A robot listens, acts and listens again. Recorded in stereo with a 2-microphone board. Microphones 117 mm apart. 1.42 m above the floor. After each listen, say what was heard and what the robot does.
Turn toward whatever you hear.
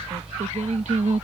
Turn 90° right.
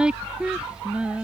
So it is at 10° right. Turn 10° right.
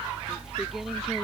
Keep listening.
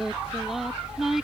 Facing the singing.